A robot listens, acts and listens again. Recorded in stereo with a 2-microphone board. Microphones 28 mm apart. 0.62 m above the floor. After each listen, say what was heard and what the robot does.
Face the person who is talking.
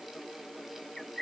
Keep listening.
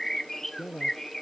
The man speaking: about 20° left or 160° left. Turn 20° left.
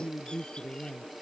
Found it: a man speaking, straight ahead.